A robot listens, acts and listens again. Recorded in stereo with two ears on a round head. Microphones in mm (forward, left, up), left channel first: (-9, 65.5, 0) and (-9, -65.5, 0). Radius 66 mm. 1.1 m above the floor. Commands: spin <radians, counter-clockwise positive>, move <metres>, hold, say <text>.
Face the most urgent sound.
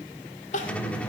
spin 0.96
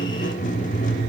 hold
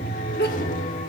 spin 1.22
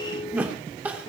spin -0.17
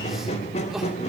say Facing the crying.